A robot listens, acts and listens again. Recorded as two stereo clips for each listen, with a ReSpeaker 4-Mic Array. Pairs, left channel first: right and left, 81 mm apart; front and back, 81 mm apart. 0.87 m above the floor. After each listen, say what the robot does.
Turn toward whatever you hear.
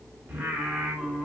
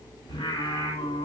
Facing the singing.